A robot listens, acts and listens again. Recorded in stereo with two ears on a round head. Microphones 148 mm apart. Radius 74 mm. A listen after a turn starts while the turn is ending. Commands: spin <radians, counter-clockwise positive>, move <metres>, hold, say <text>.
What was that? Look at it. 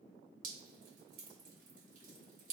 spin -0.87
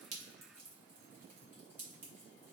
spin -0.26
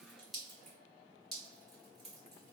say Facing the dripping, 1 to 2 m away.